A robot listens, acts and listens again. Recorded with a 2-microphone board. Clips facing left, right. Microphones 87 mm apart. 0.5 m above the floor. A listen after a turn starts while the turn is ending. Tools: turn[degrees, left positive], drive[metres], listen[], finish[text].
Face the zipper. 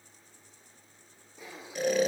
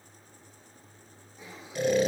Thought: The zipper: about 65° left or 115° left.
Action: turn[65]
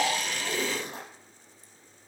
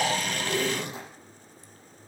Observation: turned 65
Thought: So it is at 45° left.
Action: turn[45]
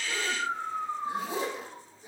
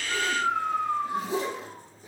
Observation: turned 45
Thought: The zipper is now 25° left.
Action: turn[25]
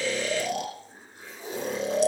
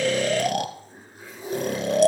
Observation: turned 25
Action: finish[Found it: a zipper, straight ahead.]